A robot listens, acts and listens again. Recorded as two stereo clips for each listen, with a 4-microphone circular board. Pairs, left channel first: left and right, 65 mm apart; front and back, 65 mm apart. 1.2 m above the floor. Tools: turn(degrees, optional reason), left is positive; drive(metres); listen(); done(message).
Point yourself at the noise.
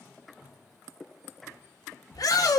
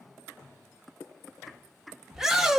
turn(degrees=100, reason="The shout: 100° left.")
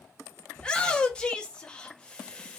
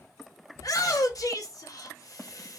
turn(degrees=15, reason="The shout is now 15° left.")
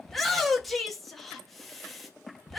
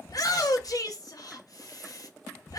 done("Facing the shout.")